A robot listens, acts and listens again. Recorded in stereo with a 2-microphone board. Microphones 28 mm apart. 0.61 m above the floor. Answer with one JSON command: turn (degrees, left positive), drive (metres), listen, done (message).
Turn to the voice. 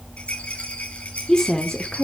{"turn": 25}
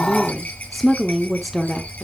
{"done": "Facing the woman speaking, 1 to 2 m away."}